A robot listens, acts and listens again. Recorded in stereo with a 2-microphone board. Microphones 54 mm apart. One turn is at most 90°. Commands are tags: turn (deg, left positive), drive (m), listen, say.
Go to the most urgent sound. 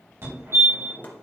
<turn deg="-55"/>
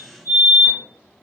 <turn deg="-40"/>
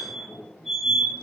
<drive m="1.0"/>
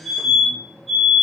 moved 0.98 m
<turn deg="-10"/>
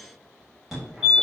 <drive m="1.0"/>
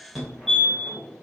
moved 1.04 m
<drive m="1.0"/>
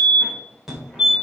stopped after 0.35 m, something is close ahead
<turn deg="-10"/>
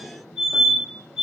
<say>Arrived at the fire alarm, straight ahead.</say>